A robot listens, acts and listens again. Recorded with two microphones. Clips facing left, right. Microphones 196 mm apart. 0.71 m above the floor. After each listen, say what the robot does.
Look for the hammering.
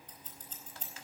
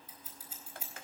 Keep listening.
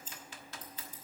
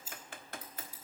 Keep listening.
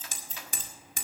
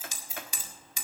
Turn 50° left.
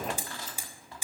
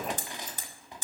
Turn 10° left.
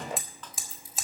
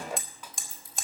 Facing the hammering, 1 to 2 m away.